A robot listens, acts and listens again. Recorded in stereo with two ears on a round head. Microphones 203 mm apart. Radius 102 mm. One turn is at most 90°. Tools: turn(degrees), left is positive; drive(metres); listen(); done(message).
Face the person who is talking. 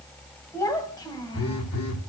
turn(degrees=20)
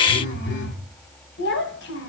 turn(degrees=90)
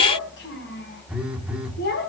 turn(degrees=50)
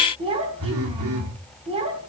turn(degrees=-25)
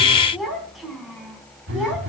done("Facing the child speaking, over 4 m away.")